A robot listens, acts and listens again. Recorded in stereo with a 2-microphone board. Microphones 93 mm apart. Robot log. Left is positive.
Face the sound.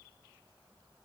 cmd idle
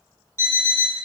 note: The alarm clock: about 30° right or 150° right.
cmd yaw -30
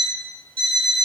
note: So it is at 115° right.
cmd yaw -115
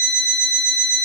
note: The alarm clock is now 20° right.
cmd yaw -20
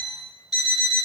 end: Found it: an alarm clock, straight ahead, under 1 m away.